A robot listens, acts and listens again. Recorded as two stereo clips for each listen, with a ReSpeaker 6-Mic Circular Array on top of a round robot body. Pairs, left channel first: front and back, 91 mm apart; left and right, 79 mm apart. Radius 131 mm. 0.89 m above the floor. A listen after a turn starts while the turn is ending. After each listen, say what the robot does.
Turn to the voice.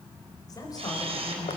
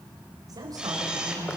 Turn 50° right.
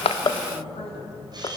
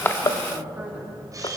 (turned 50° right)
Turn 15° right.
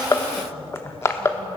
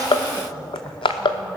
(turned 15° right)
Keep listening.
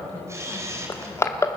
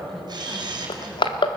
Keep listening.
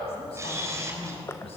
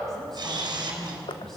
Found it: a woman speaking, straight ahead, over 4 m away.